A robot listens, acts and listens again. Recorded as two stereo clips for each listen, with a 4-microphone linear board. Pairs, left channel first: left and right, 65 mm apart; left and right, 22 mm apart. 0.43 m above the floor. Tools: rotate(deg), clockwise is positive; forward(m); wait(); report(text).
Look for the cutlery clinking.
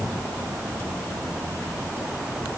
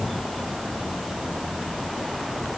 wait()
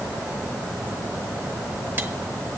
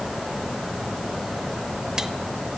wait()
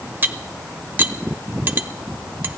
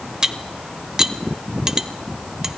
rotate(30)
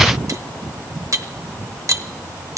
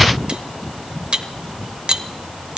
rotate(115)
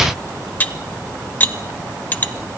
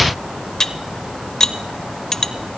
rotate(-35)
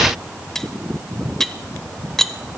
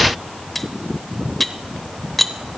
rotate(-10)
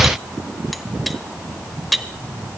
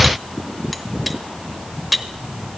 report("Facing the cutlery clinking.")